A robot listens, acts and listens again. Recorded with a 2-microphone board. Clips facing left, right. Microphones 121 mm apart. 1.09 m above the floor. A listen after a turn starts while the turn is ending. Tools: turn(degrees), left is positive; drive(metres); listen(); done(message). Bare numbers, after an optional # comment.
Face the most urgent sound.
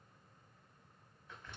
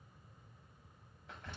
listen()
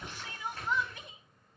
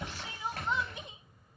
# The crying: about 20° right or 160° right.
turn(-20)
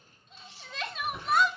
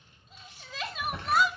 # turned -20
done("Facing the crying.")